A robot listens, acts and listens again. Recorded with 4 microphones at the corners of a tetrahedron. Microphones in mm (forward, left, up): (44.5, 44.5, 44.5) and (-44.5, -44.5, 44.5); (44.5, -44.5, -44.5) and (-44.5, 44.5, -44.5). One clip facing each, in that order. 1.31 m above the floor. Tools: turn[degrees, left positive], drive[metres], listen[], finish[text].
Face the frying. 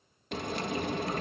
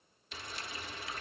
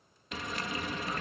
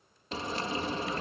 Thought: The frying: 75° left.
Action: turn[75]
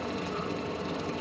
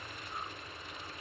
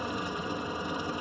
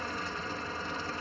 Thought: The frying is now 30° left.
Action: turn[30]
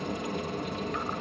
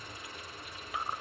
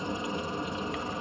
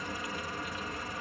Thought: The frying is now 20° left.
Action: turn[20]
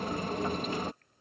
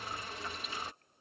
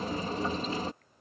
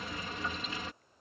Action: finish[Found it: frying, straight ahead.]